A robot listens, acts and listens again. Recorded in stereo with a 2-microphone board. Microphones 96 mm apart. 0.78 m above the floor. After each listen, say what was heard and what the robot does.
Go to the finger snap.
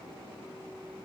Keep listening.
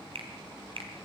The finger snap: about 75° right or 105° right. Turn 75° right.
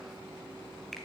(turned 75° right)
Drive 1.0 m forward.
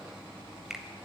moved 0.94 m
Drive 1.0 m forward.
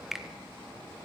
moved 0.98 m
Drive 1.0 m forward.
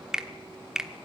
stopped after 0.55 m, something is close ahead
I am next to the finger snap.